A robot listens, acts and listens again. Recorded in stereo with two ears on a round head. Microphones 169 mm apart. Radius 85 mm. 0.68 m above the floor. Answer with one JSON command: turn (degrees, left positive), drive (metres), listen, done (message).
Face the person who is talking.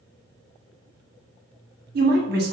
{"turn": -55}
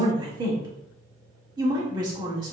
{"turn": -30}
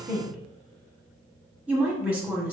{"turn": -10}
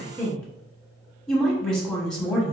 {"done": "Found it: a woman speaking, straight ahead, 1 to 2 m away."}